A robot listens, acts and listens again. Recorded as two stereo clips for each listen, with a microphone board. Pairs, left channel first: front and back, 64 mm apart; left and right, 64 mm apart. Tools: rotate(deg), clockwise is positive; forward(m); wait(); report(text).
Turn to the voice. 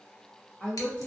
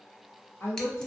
rotate(-65)
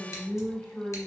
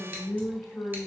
rotate(-20)
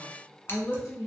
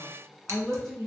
report("Found it: a woman speaking, straight ahead.")